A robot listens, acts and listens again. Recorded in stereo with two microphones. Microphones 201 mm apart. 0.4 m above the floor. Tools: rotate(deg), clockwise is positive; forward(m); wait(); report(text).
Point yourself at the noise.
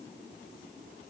wait()
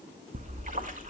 rotate(40)
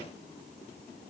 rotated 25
wait()
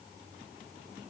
report("I heard a splash, but can't make it out now. It was about 15° right or 115° right.")